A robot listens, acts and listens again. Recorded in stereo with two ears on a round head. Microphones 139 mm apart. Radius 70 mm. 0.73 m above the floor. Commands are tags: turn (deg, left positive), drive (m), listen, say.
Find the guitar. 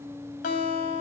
<turn deg="55"/>
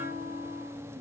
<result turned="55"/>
<listen/>
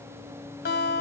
<turn deg="65"/>
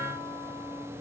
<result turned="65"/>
<listen/>
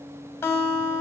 <turn deg="15"/>
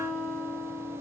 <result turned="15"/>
<say>Found it: a guitar, straight ahead.</say>